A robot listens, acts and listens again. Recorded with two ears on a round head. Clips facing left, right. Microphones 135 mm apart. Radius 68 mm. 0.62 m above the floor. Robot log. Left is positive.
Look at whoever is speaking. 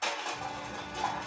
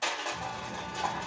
note: The child speaking: about 30° right or 150° right.
cmd yaw -30
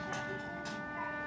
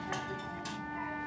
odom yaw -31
end: Found it: a child speaking, straight ahead.